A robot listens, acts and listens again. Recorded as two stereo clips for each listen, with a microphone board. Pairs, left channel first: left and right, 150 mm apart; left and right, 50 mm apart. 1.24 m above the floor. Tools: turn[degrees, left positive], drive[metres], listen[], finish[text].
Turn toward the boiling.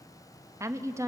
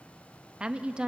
Action: listen[]
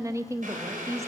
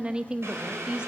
Thought: The boiling: about 60° right or 120° right.
Action: turn[-60]
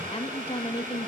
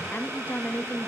Thought: So it is at 60° right.
Action: turn[-60]
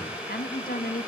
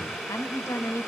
Thought: The boiling is now 10° right.
Action: turn[-10]
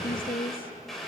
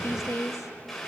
Action: finish[Found it: boiling, straight ahead, over 4 m away.]